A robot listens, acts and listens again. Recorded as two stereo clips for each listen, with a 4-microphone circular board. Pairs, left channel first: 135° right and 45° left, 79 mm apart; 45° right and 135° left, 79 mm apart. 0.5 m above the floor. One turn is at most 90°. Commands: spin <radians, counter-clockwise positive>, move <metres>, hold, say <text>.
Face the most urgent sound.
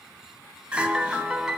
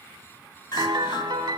spin -0.52
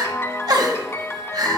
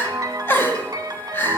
spin 0.26
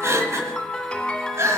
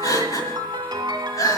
say Facing the crying, 1 to 2 m away.